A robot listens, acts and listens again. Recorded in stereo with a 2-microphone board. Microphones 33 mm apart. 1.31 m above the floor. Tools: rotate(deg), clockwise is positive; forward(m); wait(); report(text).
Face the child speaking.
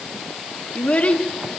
rotate(-45)
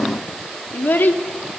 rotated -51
rotate(-80)
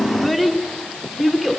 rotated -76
report("Facing the child speaking, 2 to 4 m away.")